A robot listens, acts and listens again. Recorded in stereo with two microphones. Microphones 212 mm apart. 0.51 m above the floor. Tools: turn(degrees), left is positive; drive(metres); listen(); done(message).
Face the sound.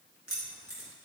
turn(degrees=90)
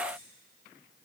listen()
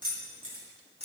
turn(degrees=30)
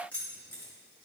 turn(degrees=10)
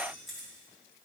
done("Found it: keys jangling, straight ahead.")